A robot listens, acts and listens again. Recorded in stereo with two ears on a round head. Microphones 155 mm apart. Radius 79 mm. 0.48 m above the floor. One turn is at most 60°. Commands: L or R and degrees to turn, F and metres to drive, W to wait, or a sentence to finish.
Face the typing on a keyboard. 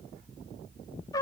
W
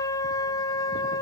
W
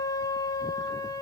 I can't make out typing on a keyboard, only a trumpet.